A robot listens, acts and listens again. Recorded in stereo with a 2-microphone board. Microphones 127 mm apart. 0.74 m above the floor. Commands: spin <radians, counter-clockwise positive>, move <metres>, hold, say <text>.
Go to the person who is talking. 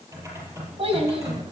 spin -0.87
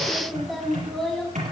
move 1.0
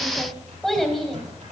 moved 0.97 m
move 1.0
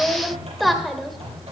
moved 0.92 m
move 1.0
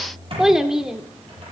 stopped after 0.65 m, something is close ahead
say I am next to the child speaking.